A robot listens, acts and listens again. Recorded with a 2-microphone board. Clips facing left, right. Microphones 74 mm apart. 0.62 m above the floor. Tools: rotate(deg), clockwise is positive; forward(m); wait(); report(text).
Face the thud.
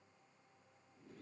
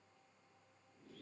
wait()
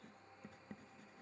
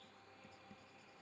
wait()
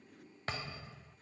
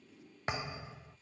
rotate(20)
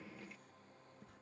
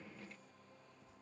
wait()
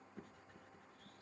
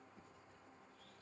report("I heard a thud, but can't make it out now. It was about straight ahead or 140° right.")